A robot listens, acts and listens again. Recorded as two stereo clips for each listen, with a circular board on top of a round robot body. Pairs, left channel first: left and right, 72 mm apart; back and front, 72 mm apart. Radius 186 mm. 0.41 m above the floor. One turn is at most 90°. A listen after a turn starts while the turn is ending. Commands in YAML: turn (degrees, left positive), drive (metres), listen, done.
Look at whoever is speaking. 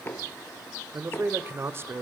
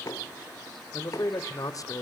turn: -90
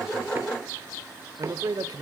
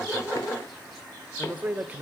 turn: -65
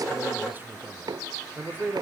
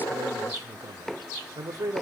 turn: -30
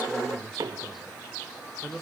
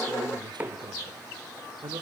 done: "Found it: a man speaking, straight ahead, 2 to 4 m away."